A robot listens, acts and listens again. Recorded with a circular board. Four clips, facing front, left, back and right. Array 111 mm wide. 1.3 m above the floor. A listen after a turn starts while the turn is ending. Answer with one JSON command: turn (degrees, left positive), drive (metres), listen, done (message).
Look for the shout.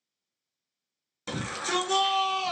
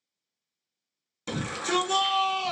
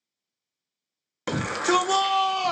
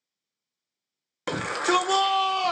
{"turn": -130}
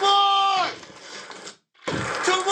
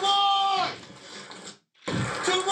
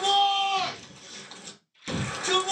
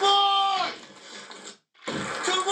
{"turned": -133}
{"done": "Found it: a shout, straight ahead."}